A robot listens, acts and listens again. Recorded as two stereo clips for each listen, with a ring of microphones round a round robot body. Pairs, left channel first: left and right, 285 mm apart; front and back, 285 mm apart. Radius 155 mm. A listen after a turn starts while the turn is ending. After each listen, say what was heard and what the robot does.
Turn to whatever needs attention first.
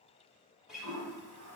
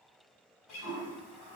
Keep listening.
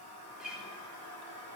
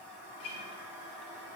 Keep listening.
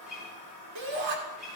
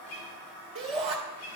The shout: 110° right. Turn 110° right.
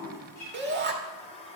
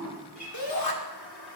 The shout is now 35° right. Turn 35° right.
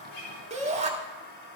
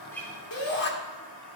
The shout is now 25° right. Turn 25° right.
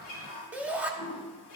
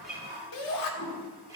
Facing the shout, 1 to 2 m away.